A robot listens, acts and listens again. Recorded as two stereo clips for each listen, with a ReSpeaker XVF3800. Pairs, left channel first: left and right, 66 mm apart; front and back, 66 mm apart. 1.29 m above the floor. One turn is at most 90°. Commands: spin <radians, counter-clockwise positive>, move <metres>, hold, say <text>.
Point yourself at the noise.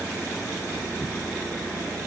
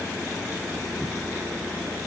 hold
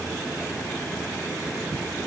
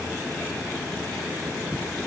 hold
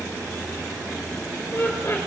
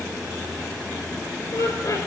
spin 0.61
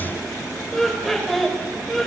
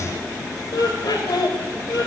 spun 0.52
say Facing the laughter.